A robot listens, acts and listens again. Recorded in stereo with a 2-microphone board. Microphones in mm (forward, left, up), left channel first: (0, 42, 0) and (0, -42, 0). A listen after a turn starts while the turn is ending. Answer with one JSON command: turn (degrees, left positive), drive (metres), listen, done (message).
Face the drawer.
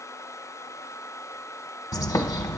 {"listen": true}
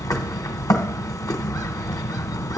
{"listen": true}
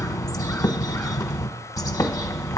{"done": "I can't make out a drawer to turn to."}